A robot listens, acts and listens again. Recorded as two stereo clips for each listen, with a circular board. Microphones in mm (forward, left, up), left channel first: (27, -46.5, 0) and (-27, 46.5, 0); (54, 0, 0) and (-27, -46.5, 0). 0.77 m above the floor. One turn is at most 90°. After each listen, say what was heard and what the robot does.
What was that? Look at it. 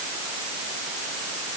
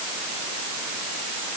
Keep listening.
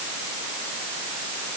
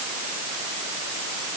Keep listening.
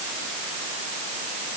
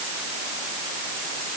I can't make out anything.